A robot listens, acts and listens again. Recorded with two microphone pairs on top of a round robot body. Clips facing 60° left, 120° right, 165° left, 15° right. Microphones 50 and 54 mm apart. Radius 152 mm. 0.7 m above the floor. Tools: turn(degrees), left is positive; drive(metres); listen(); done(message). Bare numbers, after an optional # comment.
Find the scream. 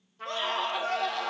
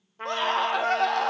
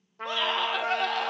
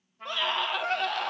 # The scream: 110° right.
turn(-110)
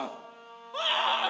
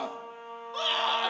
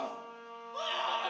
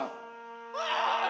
done("Facing the scream.")